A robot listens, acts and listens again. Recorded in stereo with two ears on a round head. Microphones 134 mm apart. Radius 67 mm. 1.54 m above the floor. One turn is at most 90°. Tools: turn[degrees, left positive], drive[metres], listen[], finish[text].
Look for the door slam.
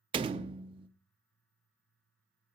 Thought: The door slam: about 40° right or 140° right.
Action: turn[-40]
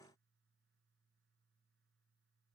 Action: listen[]
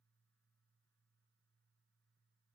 Action: finish[I heard a door slam, but can't make it out now. It was about straight ahead or 100° right.]